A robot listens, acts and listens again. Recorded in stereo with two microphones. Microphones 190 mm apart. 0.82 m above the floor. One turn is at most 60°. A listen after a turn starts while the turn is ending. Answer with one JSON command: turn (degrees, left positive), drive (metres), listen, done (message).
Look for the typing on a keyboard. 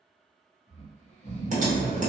{"turn": -40}
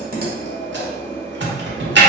{"turn": -60}
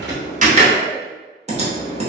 {"turn": -35}
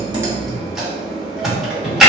{"done": "Facing the typing on a keyboard, under 1 m away."}